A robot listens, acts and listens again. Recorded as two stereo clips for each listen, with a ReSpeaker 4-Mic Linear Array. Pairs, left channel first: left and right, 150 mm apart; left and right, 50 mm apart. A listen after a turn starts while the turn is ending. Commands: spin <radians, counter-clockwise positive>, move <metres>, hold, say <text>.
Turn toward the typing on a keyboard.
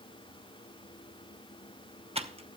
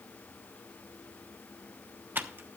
spin -0.70
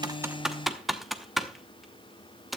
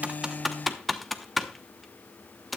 say Found it: typing on a keyboard, straight ahead, under 1 m away.